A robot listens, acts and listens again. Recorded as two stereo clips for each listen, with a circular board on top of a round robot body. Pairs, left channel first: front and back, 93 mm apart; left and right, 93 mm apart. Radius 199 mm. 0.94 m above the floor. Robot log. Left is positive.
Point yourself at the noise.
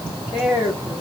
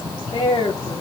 note: The woman speaking: 100° left.
cmd yaw +100
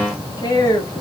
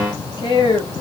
note: The woman speaking is now 55° left.
cmd yaw +55
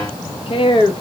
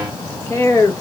note: The woman speaking is now 35° left.
cmd yaw +35
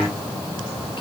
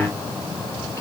cmd idle
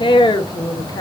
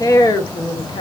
note: The woman speaking is now 50° left.
cmd yaw +50
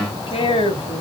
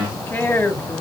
note: The woman speaking is now 20° left.
cmd yaw +20
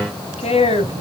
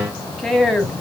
end: Facing the woman speaking, 1 to 2 m away.